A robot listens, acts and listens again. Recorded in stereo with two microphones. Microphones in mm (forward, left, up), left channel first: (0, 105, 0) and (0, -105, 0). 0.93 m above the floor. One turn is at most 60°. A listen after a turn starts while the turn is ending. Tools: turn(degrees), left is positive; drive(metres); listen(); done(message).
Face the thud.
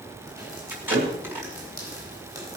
turn(degrees=-60)
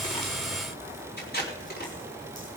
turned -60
listen()
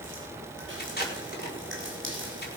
done("I heard a thud, but can't make it out now. It was about straight ahead or 60° right.")